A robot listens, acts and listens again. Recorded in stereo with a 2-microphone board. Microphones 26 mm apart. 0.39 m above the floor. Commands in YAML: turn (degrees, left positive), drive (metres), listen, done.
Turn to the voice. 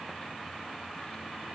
listen: true
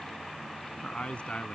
turn: 55
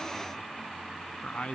turn: 70
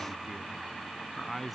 done: "Found it: a man speaking, straight ahead."